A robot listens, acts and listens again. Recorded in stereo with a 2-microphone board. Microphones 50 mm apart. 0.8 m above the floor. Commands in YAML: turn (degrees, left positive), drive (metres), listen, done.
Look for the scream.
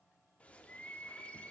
listen: true
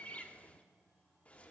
listen: true
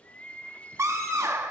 turn: -70
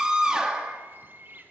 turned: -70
turn: -15
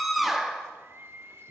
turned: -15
done: "Facing the scream, under 1 m away."